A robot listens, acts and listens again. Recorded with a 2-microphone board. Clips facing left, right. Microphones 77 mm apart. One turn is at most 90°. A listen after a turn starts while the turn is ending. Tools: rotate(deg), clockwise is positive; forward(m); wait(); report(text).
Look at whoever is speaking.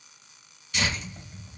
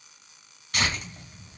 wait()
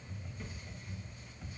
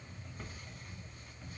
wait()
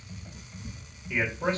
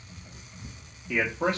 rotate(90)
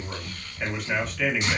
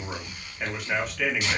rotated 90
report("Found it: a man speaking, straight ahead.")